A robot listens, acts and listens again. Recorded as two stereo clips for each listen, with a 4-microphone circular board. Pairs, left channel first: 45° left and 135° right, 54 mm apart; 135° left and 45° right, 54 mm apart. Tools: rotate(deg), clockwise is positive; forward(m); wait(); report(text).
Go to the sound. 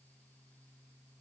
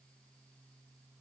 wait()
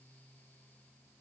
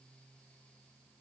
wait()
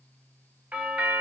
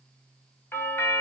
rotate(-165)
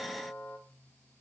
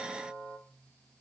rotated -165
forward(1.0)
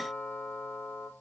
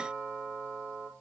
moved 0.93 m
forward(1.0)
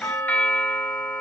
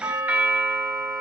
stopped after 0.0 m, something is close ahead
report("I am next to the doorbell.")